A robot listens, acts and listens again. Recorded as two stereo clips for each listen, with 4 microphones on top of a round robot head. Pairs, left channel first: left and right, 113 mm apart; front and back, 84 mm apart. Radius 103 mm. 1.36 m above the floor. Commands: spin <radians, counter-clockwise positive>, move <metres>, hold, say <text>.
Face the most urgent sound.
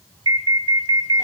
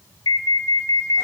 spin -0.70
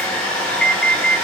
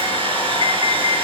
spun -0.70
say Found it: an alarm, straight ahead, 1 to 2 m away.